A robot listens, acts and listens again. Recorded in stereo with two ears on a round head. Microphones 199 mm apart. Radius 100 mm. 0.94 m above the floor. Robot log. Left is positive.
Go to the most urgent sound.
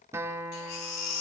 cmd yaw +90
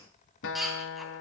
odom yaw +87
cmd fwd 1.0
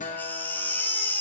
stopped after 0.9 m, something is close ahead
note: The baby crying is now 10° left.
cmd yaw +10
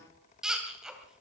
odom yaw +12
end: Blocked. The baby crying is further on, straight ahead.